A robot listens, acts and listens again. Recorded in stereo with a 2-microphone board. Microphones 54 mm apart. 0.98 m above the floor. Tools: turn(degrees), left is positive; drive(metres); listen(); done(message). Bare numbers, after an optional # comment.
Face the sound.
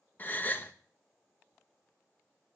# The gasp: about 35° left or 145° left.
turn(35)
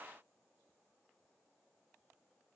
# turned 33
listen()
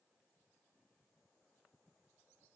done("I heard a gasp, but can't make it out now. It was about straight ahead or 110° left.")